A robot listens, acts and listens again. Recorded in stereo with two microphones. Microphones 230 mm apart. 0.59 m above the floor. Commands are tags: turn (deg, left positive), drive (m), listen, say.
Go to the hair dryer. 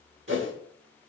<listen/>
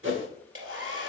<turn deg="-65"/>
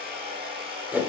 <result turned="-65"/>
<turn deg="-45"/>
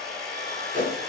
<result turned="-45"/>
<drive m="1.0"/>
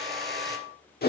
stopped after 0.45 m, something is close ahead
<say>Blocked. The hair dryer is further on, straight ahead.</say>